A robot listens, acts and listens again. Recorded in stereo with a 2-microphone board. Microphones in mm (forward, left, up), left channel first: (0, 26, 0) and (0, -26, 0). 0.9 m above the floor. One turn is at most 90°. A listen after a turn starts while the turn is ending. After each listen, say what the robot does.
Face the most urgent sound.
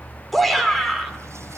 Turn 30° left.
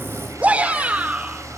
Turn 25° right.
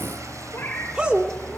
Turn 15° right.
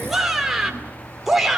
Found it: a shout, straight ahead, 2 to 4 m away.